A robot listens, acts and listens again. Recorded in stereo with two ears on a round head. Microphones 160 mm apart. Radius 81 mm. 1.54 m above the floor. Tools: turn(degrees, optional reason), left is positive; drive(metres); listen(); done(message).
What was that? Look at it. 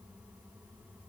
listen()
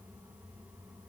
listen()
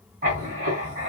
turn(degrees=-50, reason="The writing: about 50° right or 130° right.")
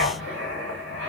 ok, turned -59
turn(degrees=-65, reason="So it is at 65° right.")
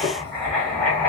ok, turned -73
done("Found it: writing, straight ahead, 2 to 4 m away.")